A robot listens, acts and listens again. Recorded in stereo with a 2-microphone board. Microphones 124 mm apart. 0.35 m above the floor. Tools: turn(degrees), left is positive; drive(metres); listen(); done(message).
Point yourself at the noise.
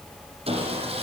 turn(degrees=-55)
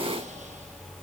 listen()
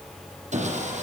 turn(degrees=-70)
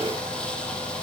turn(degrees=10)
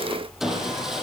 done("Facing the sawing.")